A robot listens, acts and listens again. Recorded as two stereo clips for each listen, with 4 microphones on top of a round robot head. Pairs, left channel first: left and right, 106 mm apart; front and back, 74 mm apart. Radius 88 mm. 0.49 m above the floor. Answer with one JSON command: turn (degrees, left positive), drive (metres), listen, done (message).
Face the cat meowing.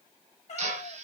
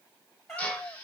{"turn": 85}
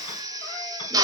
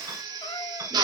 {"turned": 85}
{"listen": true}
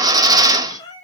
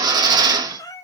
{"turn": 40}
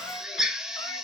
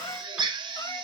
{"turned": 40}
{"turn": 20}
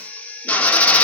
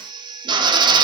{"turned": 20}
{"listen": true}
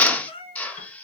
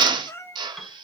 {"turn": 55}
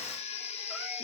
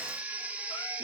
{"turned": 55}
{"listen": true}
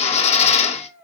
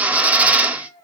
{"done": "Facing the cat meowing."}